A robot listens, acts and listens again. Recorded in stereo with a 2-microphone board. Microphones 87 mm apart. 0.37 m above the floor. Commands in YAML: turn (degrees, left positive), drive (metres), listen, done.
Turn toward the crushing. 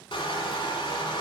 turn: 90
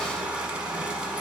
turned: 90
turn: -10
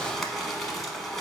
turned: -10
done: "Found it: crushing, straight ahead, under 1 m away."